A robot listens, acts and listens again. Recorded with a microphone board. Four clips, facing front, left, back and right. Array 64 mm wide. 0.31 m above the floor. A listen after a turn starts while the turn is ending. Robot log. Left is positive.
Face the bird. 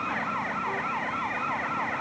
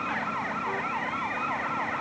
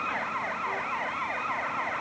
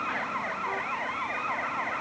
cmd idle
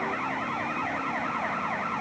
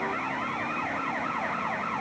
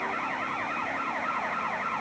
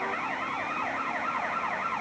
cmd idle
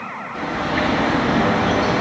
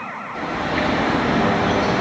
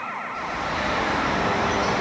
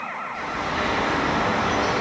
note: The bird: 15° left.
cmd yaw +15
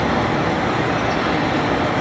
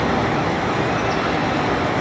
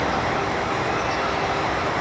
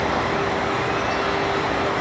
end: Facing the bird.